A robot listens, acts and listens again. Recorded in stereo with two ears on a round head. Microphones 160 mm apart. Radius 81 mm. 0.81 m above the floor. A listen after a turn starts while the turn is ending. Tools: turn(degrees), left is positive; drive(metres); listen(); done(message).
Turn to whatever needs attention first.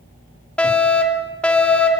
turn(degrees=30)
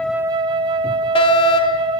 turn(degrees=140)
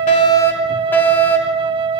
turn(degrees=15)
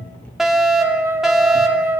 done("Found it: a fire alarm, straight ahead.")